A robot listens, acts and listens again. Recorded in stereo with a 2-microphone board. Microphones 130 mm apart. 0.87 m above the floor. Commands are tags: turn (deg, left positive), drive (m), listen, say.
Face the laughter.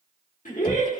<turn deg="70"/>
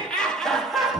<say>Facing the laughter, 1 to 2 m away.</say>